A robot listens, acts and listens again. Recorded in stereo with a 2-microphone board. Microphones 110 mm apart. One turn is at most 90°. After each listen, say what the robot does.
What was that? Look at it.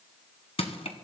Turn 65° left.
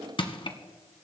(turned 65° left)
Turn 50° left.
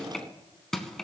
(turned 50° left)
Facing the crushing.